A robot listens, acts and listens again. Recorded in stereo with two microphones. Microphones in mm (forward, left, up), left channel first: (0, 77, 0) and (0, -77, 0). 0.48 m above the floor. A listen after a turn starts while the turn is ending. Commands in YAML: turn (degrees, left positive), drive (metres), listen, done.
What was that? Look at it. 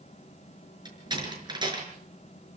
turn: -30
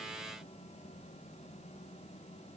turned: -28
listen: true
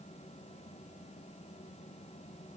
done: "I heard a door slam, but can't make it out now. It was about straight ahead or 125° right."